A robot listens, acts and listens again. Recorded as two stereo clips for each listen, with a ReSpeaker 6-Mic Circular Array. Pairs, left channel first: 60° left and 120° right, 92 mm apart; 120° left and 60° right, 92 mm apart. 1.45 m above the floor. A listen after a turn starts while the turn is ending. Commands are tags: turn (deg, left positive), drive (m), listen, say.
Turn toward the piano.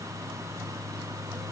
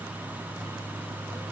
<listen/>
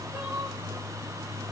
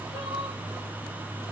<listen/>
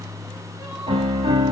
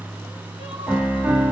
<turn deg="-130"/>
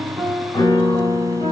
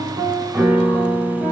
<turn deg="15"/>
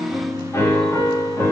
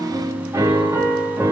<say>Found it: a piano, straight ahead.</say>